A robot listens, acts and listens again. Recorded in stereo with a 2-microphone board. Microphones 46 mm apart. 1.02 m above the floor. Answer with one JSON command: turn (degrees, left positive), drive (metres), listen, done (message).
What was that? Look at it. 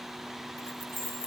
{"turn": -90}
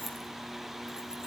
{"turn": -15}
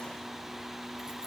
{"listen": true}
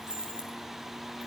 {"turn": -15}
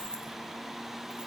{"listen": true}
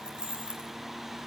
{"turn": -20}
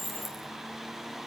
{"done": "Facing the keys jangling."}